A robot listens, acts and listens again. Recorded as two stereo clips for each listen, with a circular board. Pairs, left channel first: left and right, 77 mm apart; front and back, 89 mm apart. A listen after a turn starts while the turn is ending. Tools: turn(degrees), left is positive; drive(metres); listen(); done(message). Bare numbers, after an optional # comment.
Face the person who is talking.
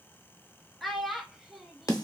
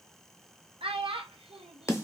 # The child speaking: straight behind.
turn(180)
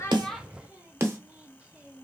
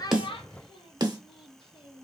listen()
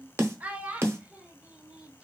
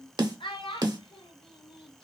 # The child speaking is now 15° right.
turn(-15)
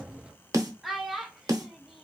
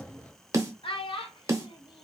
done("Facing the child speaking.")